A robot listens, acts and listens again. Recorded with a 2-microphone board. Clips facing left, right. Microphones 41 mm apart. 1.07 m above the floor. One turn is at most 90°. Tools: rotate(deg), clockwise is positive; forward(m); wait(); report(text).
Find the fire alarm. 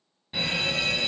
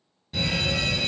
rotate(-20)
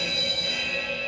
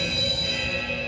report("Found it: a fire alarm, straight ahead.")